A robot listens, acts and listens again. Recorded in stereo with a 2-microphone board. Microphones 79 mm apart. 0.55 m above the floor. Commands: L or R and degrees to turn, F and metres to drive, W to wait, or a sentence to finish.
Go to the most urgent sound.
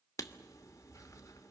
W
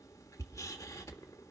W
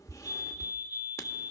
R25
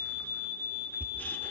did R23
R125
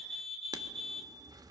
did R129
F1.0
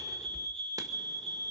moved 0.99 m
L10
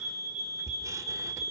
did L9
F1.0
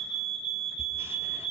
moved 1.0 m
F1.0
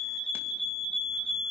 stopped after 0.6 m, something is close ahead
L10
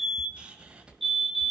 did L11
Arrived at the fire alarm, straight ahead.